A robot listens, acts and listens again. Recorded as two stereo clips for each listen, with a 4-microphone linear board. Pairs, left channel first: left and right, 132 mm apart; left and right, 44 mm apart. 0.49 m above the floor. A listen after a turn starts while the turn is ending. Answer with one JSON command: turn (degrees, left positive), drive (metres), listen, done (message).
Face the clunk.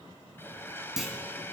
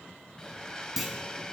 {"turn": -30}
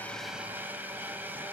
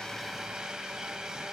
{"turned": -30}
{"listen": true}
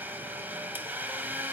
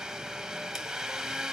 {"done": "I heard a clunk, but can't make it out now. It was about 25° left or 145° right."}